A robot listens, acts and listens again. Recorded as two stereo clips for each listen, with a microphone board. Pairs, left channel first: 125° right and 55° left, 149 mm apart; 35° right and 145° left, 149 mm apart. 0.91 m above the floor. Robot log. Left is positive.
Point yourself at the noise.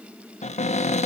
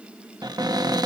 note: The cupboard door: 155° right.
cmd yaw -155
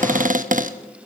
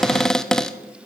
note: The cupboard door is now 50° left.
cmd yaw +50
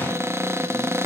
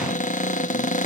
note: The cupboard door is now 15° right.
cmd yaw -15
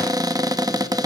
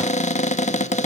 end: Found it: a cupboard door, straight ahead, under 1 m away.